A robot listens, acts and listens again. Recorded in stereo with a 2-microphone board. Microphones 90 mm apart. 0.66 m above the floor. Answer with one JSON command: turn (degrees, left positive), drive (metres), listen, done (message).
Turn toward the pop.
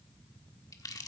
{"listen": true}
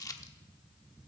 {"listen": true}
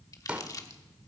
{"turn": -15}
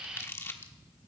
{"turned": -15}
{"listen": true}
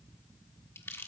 {"done": "I heard a pop, but can't make it out now. It was about straight ahead or 150° right."}